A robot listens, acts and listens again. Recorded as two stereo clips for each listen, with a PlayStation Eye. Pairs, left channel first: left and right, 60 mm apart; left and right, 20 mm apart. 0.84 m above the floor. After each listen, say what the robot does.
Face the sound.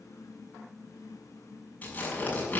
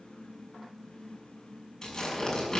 Turn 25° left.
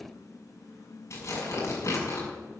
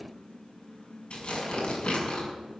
Turn 130° left.
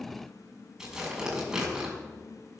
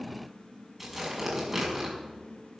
Facing the tearing paper.